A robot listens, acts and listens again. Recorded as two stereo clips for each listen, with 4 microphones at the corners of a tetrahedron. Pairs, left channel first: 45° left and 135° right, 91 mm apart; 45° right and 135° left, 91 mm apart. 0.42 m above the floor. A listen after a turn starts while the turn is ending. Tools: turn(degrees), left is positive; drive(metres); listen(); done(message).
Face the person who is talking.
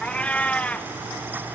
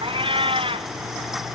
listen()
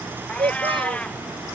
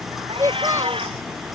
turn(degrees=-165)
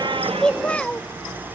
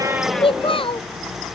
turn(degrees=-30)
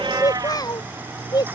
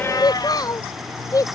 done("Facing the child speaking.")